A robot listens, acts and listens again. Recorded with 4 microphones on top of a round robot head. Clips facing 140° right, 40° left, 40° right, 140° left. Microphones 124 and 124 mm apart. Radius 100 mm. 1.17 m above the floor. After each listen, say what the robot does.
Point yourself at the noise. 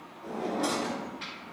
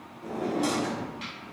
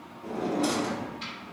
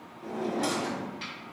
Turn 110° left.
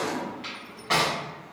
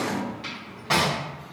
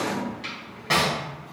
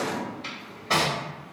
Turn 20° right.
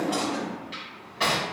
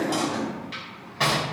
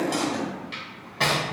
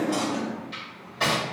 Found it: a drawer, straight ahead.